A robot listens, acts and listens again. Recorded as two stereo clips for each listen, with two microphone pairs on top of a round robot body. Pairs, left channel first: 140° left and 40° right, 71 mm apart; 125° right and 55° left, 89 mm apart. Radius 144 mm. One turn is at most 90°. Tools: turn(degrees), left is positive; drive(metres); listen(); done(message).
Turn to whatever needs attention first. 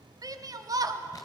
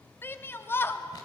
turn(degrees=-60)
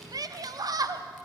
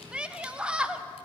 turn(degrees=-20)
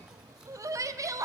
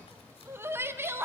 done("Found it: a shout, straight ahead, 1 to 2 m away.")